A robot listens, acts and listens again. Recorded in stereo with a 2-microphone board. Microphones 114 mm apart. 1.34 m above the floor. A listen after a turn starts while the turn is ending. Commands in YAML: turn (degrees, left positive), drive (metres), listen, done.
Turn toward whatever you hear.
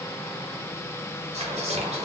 turn: -70
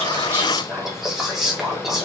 done: "Facing the whispering."